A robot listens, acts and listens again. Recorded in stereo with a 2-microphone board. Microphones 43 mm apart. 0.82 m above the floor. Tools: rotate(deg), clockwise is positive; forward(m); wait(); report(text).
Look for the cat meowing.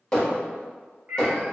rotate(50)
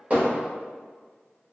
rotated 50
wait()
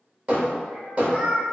rotate(25)
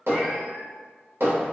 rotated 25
wait()
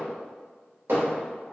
wait()
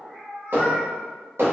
rotate(-25)
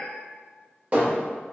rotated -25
rotate(10)
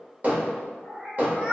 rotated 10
report("Found it: a cat meowing, straight ahead.")